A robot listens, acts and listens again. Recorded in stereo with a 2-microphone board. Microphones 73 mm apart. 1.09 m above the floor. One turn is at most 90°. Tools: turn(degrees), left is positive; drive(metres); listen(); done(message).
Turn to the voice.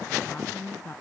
turn(degrees=30)
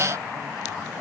listen()
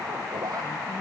listen()
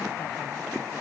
done("I heard a woman speaking, but can't make it out now. It was about straight ahead or 120° left.")